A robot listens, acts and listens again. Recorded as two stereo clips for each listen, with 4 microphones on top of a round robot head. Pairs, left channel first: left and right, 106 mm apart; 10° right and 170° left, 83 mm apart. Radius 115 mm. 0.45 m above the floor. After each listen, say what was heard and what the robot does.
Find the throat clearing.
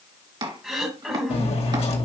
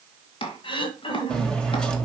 Found it: throat clearing, straight ahead.